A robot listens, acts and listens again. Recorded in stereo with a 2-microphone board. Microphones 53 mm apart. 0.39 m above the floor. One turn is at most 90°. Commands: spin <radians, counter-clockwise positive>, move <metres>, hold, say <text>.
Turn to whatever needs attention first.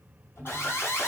spin 0.79
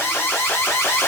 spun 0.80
spin 1.31
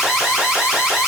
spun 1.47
say Facing the alarm, under 1 m away.